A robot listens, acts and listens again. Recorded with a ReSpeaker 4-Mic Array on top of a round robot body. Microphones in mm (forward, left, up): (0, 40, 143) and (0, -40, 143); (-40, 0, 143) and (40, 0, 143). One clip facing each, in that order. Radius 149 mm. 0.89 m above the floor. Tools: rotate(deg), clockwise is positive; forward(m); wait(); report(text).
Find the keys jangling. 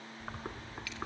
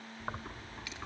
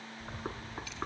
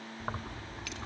rotate(20)
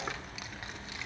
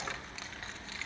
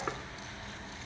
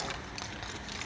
rotate(-15)
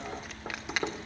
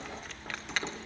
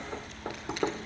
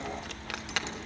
rotate(-10)
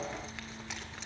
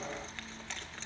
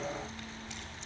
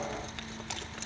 rotate(-10)
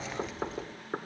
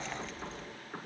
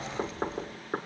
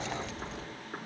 rotate(-10)
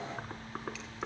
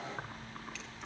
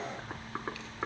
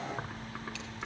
report("Facing the keys jangling, 2 to 4 m away.")